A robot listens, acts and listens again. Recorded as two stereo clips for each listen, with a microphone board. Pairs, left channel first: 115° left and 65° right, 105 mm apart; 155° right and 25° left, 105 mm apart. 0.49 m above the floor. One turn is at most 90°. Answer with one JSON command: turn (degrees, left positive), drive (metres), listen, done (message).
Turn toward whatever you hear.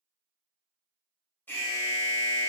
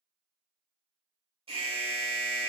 {"turn": 40}
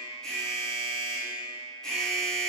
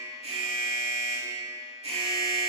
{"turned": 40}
{"turn": 25}
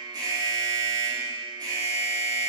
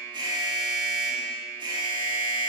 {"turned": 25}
{"turn": -20}
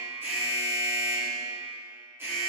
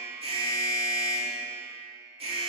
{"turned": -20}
{"done": "Found it: an alarm, straight ahead, 1 to 2 m away."}